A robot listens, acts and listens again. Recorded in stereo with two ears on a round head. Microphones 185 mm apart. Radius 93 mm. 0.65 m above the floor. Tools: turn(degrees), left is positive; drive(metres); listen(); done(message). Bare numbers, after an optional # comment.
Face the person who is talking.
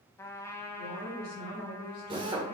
# The woman speaking: about 50° left or 130° left.
turn(50)
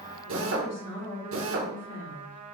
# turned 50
# So it is at 75° left.
turn(75)
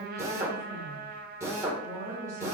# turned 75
# The woman speaking is now 15° right.
turn(-15)
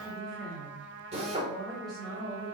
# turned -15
done("Found it: a woman speaking, straight ahead.")